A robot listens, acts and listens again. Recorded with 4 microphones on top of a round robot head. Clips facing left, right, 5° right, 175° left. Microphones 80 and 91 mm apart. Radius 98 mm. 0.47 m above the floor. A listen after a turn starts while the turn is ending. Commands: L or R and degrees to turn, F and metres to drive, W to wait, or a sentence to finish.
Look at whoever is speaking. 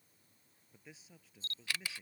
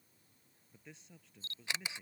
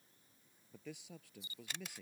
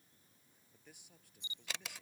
Found it: a man speaking, straight ahead.